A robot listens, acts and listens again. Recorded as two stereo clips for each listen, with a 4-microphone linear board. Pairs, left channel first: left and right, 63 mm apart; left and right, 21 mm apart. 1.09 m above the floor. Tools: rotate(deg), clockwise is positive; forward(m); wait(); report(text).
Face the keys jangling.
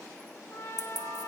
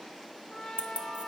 rotate(90)
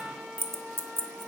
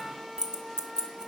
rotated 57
rotate(40)
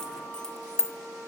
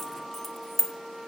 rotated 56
rotate(-10)
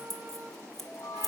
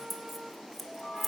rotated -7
report("Found it: keys jangling, straight ahead.")